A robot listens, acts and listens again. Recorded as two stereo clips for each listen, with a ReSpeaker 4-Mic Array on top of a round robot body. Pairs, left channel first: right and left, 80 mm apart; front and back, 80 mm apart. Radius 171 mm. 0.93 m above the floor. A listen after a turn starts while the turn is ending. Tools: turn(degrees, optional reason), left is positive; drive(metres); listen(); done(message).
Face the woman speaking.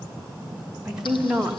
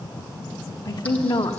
done("Found it: a woman speaking, straight ahead.")